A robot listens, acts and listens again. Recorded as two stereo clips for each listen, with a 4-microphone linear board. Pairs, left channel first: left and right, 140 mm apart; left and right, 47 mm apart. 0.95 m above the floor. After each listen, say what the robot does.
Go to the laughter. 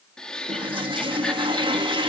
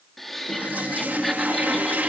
Turn 30° left.
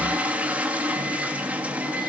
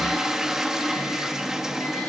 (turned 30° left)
Keep listening.
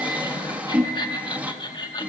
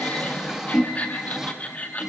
Turn 145° left.
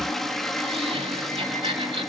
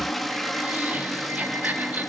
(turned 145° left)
Turn 40° right.
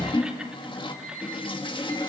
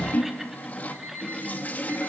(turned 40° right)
Keep listening.
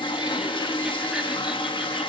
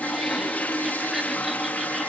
Keep listening.
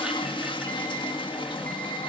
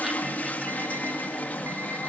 Facing where the laughter came from. I can't hear it now. I did not reach it.